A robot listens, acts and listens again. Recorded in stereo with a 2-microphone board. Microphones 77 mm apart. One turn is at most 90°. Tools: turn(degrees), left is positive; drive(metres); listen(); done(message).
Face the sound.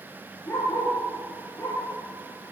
turn(degrees=40)
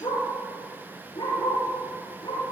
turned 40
turn(degrees=90)
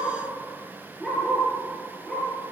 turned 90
done("Facing the dog barking, over 4 m away.")